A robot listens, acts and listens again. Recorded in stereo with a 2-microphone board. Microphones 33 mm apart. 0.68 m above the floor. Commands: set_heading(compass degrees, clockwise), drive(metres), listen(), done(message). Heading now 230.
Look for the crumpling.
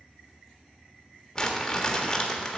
set_heading(215)
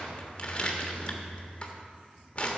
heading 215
set_heading(65)
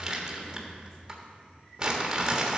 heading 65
set_heading(85)
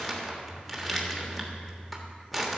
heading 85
done("Found it: crumpling, straight ahead.")